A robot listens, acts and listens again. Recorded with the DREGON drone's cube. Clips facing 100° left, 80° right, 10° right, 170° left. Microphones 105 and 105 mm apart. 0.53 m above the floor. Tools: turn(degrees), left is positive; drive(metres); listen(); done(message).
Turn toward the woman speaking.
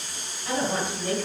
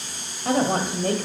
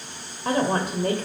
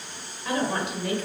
turn(degrees=-55)
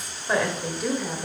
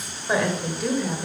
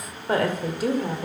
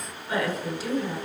turn(degrees=15)
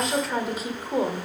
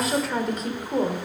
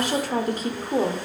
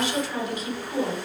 turn(degrees=25)
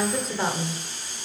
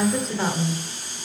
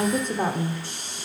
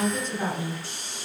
turn(degrees=20)
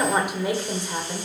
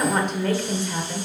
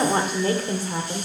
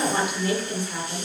turn(degrees=30)
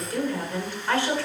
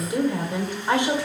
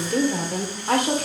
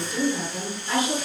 turn(degrees=-10)
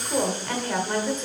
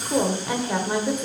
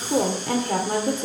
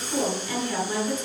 done("Facing the woman speaking, 1 to 2 m away.")